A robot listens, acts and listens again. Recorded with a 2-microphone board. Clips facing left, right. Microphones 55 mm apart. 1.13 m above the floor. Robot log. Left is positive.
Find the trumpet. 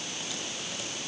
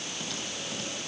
cmd idle
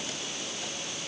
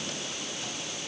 cmd idle
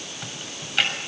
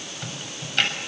end: I can't make out a trumpet to turn to.